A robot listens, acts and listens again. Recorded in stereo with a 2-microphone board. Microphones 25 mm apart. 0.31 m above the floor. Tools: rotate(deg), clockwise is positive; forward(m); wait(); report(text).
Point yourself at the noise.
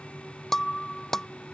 rotate(-15)
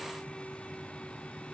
wait()
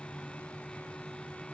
report("I heard breaking glass, but can't make it out now. It was about straight ahead or 150° left.")